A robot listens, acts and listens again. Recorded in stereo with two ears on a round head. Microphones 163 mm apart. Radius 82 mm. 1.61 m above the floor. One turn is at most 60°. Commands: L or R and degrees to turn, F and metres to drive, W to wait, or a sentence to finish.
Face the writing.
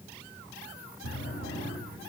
W
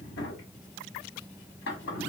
W
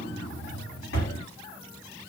I can't make out writing to turn to.